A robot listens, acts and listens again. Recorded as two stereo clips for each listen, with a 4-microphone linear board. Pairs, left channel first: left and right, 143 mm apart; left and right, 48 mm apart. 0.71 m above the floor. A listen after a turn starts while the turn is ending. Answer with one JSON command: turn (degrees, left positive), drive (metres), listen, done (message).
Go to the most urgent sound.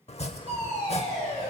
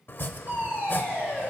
{"turn": -55}
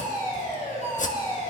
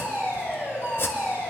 {"turn": -65}
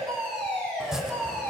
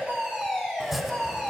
{"turn": 15}
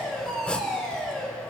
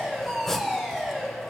{"drive": 1.0}
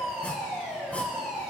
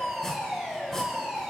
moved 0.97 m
{"drive": 1.0}
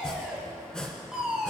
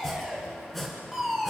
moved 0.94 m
{"turn": -10}
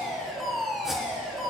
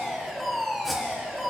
{"drive": 1.0}
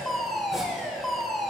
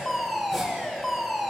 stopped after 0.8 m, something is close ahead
{"done": "Arrived at the fire alarm, straight ahead."}